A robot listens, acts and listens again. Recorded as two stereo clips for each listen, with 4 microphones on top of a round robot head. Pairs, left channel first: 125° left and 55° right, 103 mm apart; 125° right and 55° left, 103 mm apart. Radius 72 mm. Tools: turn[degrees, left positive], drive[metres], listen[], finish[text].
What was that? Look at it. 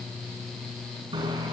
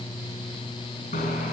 Thought: The bicycle bell: 110° right.
Action: turn[-110]
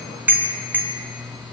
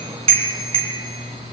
Thought: The bicycle bell is now 20° left.
Action: turn[20]
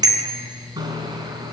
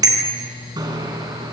Action: finish[Facing the bicycle bell, 2 to 4 m away.]